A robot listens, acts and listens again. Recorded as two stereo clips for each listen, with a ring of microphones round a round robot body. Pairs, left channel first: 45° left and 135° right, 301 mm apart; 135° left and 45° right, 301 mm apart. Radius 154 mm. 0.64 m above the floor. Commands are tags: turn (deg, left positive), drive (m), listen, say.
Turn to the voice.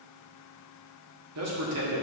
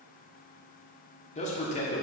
<turn deg="-160"/>
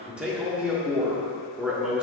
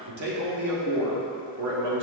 <turn deg="-50"/>
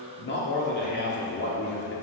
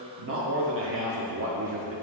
<say>Found it: a man speaking, straight ahead, 1 to 2 m away.</say>